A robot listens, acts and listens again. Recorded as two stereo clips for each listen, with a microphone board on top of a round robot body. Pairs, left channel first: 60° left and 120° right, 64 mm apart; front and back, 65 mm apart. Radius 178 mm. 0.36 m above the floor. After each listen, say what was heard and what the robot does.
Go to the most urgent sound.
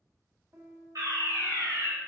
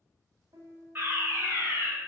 The fire alarm: 125° right. Turn 125° right.
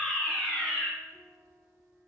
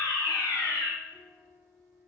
The fire alarm is now 25° right. Turn 25° right.
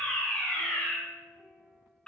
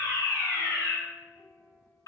The fire alarm is now 15° right. Turn 15° right.
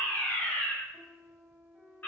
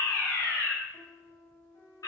Drive 1.0 m forward.
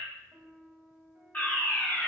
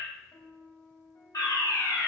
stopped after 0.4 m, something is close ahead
Blocked. The fire alarm is further on, straight ahead.